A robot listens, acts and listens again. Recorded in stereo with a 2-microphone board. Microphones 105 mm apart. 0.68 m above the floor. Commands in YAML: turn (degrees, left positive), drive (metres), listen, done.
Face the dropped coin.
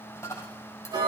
turn: 25
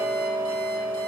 listen: true
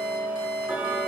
done: "I heard a dropped coin, but can't make it out now. It was about straight ahead or 130° left."